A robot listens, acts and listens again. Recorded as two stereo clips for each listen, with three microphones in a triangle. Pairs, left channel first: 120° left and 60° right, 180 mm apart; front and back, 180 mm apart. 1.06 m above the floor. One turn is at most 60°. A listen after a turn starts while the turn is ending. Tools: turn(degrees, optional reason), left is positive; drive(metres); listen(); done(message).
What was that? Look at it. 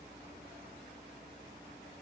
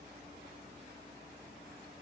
listen()
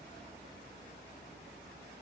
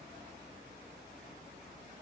listen()
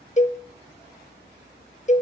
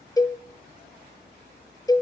turn(degrees=60, reason="The cowbell: 70° left.")
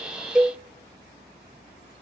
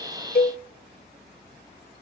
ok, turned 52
turn(degrees=15, reason="The cowbell is now 15° left.")
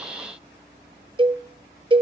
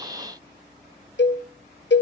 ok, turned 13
done("Facing the cowbell.")